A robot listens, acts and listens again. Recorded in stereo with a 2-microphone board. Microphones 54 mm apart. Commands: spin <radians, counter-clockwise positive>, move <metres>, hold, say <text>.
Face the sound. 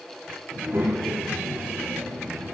spin -1.13
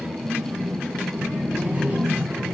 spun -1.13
spin -0.61
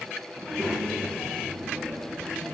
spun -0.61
say Found it: a child speaking, straight ahead.